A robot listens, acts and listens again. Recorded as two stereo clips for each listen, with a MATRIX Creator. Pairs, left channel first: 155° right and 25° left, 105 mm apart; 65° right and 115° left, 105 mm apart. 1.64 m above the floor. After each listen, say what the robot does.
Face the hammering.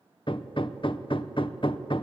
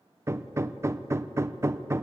Turn 175° left.
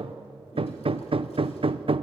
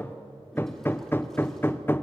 Facing the hammering, under 1 m away.